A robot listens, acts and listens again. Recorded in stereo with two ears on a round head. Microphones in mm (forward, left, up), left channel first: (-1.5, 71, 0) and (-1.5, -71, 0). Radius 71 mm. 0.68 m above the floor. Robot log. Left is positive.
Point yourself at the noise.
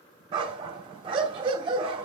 note: The dog barking: about 30° right or 150° right.
cmd yaw -30
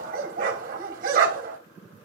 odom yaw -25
note: So it is at 125° right.
cmd yaw -125
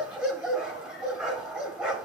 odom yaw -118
end: Facing the dog barking.